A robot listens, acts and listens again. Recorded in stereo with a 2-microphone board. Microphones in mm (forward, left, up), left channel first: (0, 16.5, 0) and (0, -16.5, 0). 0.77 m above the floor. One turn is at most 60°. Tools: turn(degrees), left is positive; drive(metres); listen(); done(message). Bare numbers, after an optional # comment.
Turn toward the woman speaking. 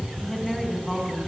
turn(30)
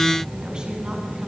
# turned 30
listen()
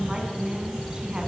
# So it is at 25° right.
turn(-25)
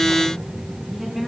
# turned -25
done("Found it: a woman speaking, straight ahead.")